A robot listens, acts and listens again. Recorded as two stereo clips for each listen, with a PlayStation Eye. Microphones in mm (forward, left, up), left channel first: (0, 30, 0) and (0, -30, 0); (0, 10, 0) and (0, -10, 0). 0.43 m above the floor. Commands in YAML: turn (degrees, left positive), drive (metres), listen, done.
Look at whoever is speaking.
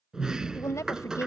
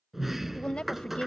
turn: 60
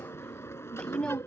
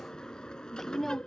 turn: 15
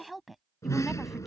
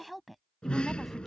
done: "Found it: a woman speaking, straight ahead."